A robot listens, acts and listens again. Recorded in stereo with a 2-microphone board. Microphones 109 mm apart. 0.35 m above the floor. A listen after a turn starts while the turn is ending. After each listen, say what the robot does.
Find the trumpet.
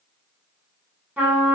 Turn 15° right.
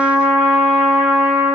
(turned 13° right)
Found it: a trumpet, straight ahead, under 1 m away.